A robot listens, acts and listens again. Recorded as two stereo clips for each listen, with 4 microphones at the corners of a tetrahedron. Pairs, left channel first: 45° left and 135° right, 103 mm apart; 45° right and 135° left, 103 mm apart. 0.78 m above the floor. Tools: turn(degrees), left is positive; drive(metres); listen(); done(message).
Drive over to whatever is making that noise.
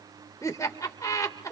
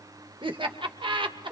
turn(degrees=100)
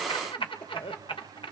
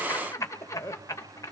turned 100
turn(degrees=15)
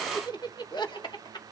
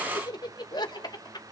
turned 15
drive(metres=1.0)
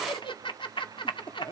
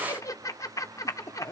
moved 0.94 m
turn(degrees=10)
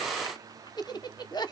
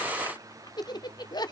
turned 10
drive(metres=1.0)
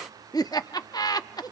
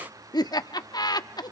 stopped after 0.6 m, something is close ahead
done("I am next to the laughter.")